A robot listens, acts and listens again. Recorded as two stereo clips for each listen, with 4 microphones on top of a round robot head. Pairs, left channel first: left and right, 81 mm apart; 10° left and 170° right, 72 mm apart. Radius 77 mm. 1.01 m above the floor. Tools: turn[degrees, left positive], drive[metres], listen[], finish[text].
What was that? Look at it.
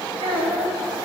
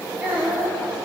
Thought: The child speaking: 95° right.
Action: turn[-95]
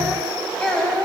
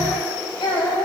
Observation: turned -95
Thought: The child speaking is now 10° left.
Action: turn[10]
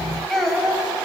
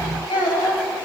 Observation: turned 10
Action: finish[Facing the child speaking, over 4 m away.]